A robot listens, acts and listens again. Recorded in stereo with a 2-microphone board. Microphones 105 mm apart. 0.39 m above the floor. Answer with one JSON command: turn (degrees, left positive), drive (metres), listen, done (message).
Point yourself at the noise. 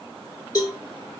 {"turn": 40}
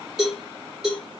{"done": "Facing the cowbell, 2 to 4 m away."}